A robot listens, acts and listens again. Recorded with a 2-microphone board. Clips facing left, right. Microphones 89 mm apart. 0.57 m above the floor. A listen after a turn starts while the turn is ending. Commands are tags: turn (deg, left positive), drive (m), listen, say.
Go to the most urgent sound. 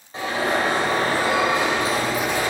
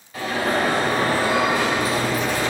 <turn deg="25"/>
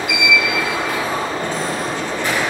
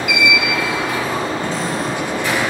<turn deg="130"/>
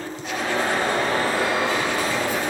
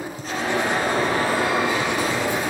<turn deg="-15"/>
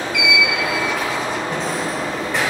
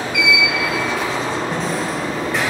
<drive m="1.0"/>
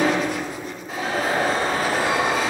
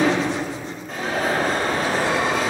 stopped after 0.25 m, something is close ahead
<say>Something is in my way. I am facing the alarm but have not reached it.</say>